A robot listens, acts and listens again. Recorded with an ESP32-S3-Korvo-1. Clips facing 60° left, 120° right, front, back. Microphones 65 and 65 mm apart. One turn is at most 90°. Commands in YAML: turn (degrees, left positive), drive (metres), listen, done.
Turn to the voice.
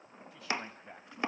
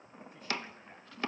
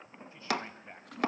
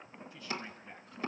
turn: 60
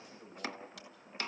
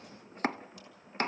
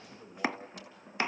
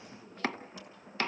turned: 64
done: "Facing the man speaking, over 4 m away."